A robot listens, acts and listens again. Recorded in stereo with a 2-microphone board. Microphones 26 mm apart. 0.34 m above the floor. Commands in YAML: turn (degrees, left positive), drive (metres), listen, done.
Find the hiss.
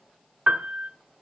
listen: true
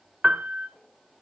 listen: true
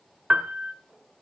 done: "I can't make out a hiss to turn to."